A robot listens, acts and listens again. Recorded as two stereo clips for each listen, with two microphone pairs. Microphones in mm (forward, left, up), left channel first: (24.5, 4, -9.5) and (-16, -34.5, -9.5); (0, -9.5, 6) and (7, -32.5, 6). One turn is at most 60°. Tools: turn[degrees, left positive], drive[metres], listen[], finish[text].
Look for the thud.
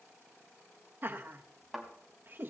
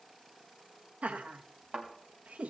Thought: The thud: 45° right.
Action: turn[-45]
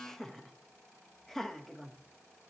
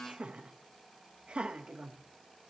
Action: finish[Facing where the thud came from. I can't hear it now.]